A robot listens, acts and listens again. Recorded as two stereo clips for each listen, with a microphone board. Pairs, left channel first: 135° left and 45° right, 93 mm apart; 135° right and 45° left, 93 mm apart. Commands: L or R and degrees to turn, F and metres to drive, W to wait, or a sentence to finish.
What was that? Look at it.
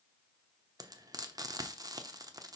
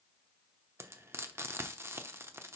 R10
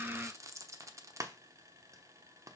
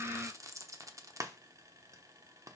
Found it: frying, straight ahead, under 1 m away.